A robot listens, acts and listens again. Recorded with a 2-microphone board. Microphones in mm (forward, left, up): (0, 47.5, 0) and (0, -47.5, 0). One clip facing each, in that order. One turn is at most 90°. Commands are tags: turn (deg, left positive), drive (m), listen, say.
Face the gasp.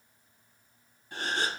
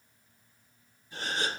<turn deg="90"/>
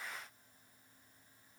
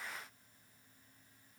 <say>I heard a gasp from this way, but can't make it out now.</say>